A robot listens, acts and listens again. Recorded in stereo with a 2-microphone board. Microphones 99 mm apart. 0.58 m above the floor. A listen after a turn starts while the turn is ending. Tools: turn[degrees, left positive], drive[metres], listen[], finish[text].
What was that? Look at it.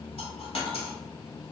Thought: The dropped coin: about 75° left or 105° left.
Action: turn[75]
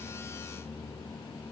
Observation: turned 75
Action: listen[]
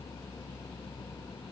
Action: finish[I heard a dropped coin, but can't make it out now. It was about straight ahead or 30° left.]